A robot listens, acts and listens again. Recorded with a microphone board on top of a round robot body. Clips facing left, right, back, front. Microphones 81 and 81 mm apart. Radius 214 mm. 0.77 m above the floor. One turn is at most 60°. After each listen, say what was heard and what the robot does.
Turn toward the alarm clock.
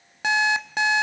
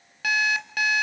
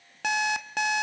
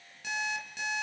The alarm clock: 155° left. Turn 60° left.
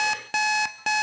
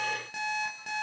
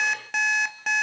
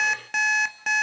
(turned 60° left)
The alarm clock is now 90° left. Turn 60° left.
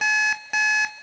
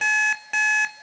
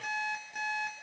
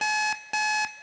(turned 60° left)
Facing the alarm clock.